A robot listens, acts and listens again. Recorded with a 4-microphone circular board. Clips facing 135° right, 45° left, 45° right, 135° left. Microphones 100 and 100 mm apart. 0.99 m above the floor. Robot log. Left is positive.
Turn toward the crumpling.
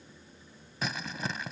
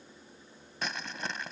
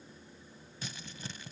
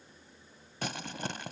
note: The crumpling: 135° left.
cmd yaw +135
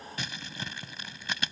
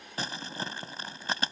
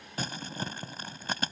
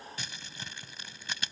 end: Found it: crumpling, straight ahead.